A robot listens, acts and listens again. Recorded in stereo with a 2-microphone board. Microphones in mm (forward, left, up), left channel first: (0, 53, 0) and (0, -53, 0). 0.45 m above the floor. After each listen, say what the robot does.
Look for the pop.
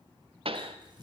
Turn 60° right.
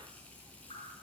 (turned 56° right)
Keep listening.
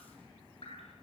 I heard a pop, but can't make it out now. It was about 5° right or 65° right.